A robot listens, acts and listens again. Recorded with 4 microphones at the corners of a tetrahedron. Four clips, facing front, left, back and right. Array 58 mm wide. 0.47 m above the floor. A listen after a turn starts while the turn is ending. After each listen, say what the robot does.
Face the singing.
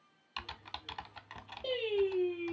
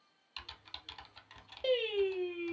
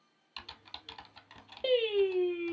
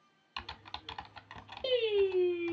Turn 150° left.
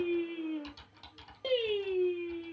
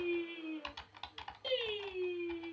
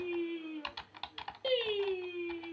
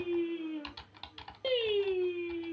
Turn 75° right.
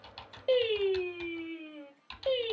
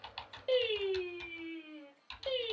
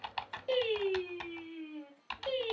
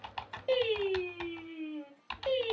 Turn 15° right.
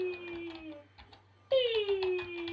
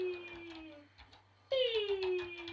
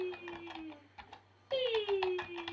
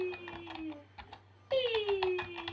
Found it: singing, straight ahead.